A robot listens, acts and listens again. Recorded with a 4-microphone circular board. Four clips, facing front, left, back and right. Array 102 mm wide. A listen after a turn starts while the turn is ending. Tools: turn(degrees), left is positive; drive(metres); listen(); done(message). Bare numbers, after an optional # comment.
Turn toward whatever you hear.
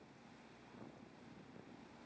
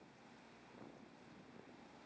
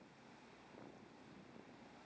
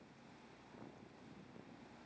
listen()
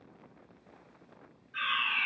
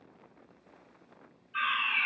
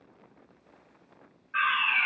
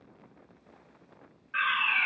# The fire alarm: 125° right.
turn(-125)
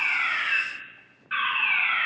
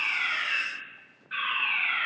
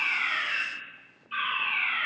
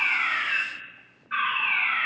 # The fire alarm is now 20° right.
turn(-20)
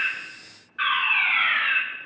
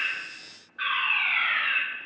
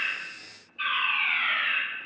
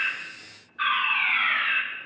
done("Found it: a fire alarm, straight ahead, over 4 m away.")